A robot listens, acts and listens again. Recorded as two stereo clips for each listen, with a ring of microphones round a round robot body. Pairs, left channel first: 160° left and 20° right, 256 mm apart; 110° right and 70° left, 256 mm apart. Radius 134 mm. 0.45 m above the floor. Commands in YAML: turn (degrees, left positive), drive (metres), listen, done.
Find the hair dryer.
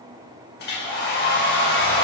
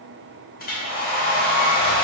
turn: -160
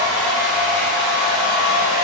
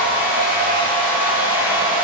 turn: -15
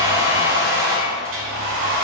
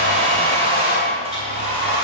done: "Facing the hair dryer, 1 to 2 m away."